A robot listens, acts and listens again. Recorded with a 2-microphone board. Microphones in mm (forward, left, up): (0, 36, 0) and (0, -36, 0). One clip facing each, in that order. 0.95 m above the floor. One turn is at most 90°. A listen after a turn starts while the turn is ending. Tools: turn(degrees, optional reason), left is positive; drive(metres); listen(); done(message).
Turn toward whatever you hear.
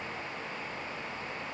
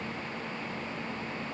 listen()
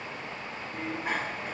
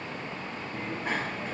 turn(degrees=30)
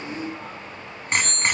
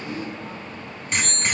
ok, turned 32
turn(degrees=90, reason="So it is at 145° left.")
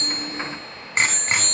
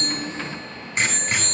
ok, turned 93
turn(degrees=50, reason="The bicycle bell is now 50° left.")
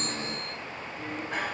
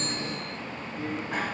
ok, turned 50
done("Facing the bicycle bell, over 4 m away.")